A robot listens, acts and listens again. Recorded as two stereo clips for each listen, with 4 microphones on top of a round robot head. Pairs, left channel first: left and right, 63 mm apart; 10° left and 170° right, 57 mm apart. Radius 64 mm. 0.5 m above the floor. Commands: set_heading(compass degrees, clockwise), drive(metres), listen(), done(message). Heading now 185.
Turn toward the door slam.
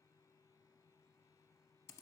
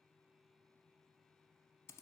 listen()
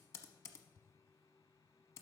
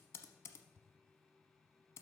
listen()
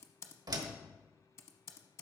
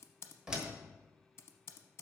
set_heading(275)
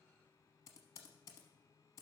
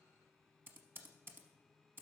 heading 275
done("Facing where the door slam came from. I can't hear it now.")